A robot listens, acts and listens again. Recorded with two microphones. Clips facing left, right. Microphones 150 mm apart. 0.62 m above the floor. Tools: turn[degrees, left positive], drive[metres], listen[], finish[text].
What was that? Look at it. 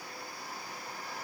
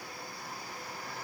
Action: listen[]
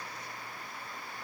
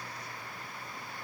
Action: listen[]
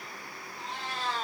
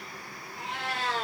Action: turn[-90]
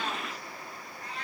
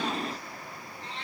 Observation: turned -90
Thought: So it is at 30° right.
Action: turn[-30]
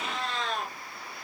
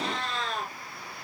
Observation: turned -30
Action: finish[Facing the cat meowing.]